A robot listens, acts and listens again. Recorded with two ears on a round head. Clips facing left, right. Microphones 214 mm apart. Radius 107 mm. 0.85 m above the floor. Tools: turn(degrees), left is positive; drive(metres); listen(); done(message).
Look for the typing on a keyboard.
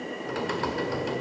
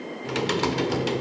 turn(degrees=-50)
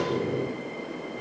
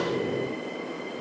done("Facing the typing on a keyboard.")